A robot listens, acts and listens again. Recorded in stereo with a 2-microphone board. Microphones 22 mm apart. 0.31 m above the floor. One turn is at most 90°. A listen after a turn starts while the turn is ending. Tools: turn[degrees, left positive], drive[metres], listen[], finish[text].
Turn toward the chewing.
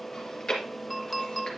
Thought: The chewing: about 35° left or 145° left.
Action: turn[35]
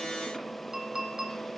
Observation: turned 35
Action: listen[]
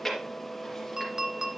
Action: finish[Found it: chewing, straight ahead.]